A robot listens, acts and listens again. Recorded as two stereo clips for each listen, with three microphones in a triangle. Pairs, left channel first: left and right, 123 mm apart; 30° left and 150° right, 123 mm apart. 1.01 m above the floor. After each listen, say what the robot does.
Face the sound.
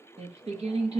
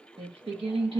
Turn 115° right.
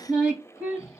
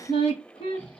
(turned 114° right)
Turn 10° right.
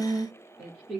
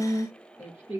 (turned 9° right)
Turn 10° right.
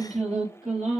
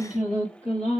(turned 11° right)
Facing the singing, 2 to 4 m away.